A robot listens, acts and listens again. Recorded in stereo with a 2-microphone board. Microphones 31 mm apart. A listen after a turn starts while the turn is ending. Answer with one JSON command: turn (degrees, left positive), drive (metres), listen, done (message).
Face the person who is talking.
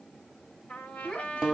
{"turn": 35}
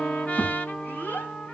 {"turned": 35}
{"turn": 110}
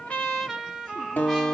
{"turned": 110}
{"listen": true}
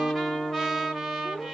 {"turn": 45}
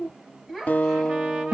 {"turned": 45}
{"done": "Found it: a child speaking, straight ahead, over 4 m away."}